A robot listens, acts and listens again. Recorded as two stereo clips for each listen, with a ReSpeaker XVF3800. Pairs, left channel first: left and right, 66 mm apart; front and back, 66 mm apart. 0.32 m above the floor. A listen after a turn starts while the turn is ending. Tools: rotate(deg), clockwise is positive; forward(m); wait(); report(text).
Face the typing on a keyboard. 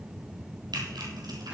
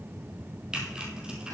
rotate(105)
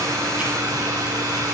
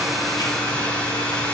wait()
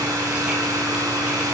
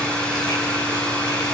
wait()
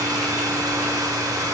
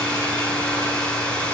report("I heard typing on a keyboard from this way, but can't make it out now.")